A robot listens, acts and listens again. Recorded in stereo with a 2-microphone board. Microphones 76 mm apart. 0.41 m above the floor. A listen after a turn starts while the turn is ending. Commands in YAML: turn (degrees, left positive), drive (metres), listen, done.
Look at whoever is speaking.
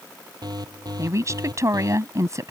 turn: -45
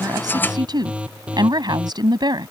turn: -90
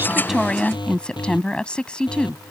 turn: 15
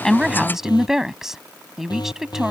done: "Found it: a woman speaking, straight ahead."